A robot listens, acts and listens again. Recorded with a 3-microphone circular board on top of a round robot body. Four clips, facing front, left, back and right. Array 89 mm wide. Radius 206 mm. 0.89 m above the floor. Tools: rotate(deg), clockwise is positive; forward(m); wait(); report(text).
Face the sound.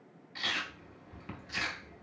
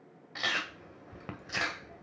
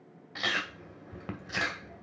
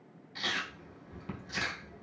rotate(-140)
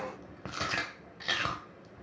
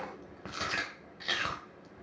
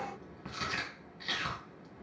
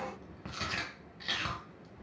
rotate(-25)
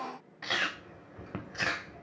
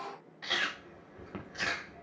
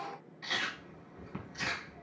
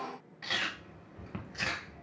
rotate(-15)
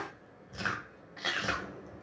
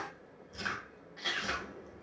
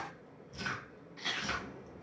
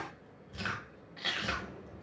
report("Found it: chewing, straight ahead.")